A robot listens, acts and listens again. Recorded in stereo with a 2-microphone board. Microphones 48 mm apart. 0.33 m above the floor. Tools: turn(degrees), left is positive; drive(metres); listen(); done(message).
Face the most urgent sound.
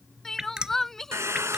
turn(degrees=30)
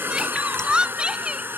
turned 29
turn(degrees=-20)
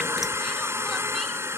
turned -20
listen()
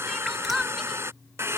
done("Facing the crying.")